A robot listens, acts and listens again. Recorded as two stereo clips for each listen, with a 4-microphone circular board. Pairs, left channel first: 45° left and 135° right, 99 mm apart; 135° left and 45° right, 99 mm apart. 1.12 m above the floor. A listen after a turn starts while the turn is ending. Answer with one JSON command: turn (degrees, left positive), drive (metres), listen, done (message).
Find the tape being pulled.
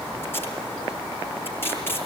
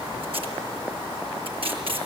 {"turn": -20}
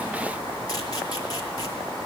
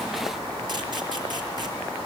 {"listen": true}
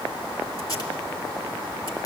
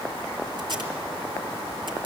{"done": "Facing the tape being pulled."}